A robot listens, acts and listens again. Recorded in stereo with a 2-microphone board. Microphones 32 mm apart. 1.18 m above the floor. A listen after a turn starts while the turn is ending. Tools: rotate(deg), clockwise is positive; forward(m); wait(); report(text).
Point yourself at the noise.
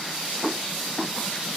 wait()
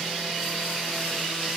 wait()
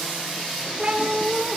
rotate(25)
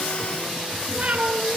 rotate(140)
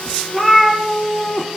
report("Found it: a cat meowing, straight ahead, over 4 m away.")